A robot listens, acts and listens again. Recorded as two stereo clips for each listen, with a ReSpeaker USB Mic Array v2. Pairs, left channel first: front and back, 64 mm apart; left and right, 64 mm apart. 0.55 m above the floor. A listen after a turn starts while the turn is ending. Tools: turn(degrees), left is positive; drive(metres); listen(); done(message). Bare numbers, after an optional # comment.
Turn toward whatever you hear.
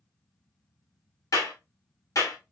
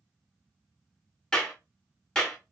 # The clap: 15° left.
turn(15)
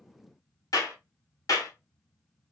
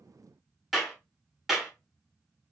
done("Facing the clap.")